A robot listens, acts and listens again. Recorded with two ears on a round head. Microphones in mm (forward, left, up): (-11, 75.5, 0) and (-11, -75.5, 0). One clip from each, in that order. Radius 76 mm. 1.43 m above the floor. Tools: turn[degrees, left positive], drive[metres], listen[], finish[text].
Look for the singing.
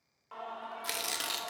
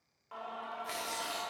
Thought: The singing: about 15° right or 165° right.
Action: turn[-15]
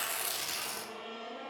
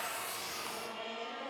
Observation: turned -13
Thought: So it is at 115° right.
Action: turn[-115]
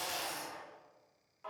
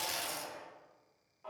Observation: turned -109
Thought: The singing is now 40° left.
Action: turn[40]
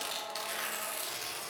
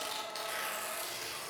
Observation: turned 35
Thought: The singing is now 10° left.
Action: turn[10]
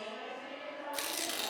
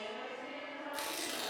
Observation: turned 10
Action: finish[Found it: singing, straight ahead, 2 to 4 m away.]